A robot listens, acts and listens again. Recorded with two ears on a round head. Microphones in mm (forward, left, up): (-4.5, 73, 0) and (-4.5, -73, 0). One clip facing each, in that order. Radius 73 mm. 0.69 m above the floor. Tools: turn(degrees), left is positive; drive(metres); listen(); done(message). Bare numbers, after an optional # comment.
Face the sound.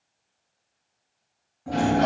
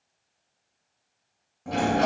# The sliding door: about 45° right or 135° right.
turn(-45)
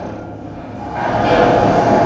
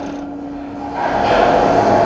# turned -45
done("Facing the sliding door.")